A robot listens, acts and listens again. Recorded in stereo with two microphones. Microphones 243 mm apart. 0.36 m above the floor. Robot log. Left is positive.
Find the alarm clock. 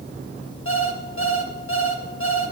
note: The alarm clock: about 55° left or 125° left.
cmd yaw +55
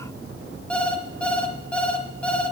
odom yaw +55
end: Facing the alarm clock.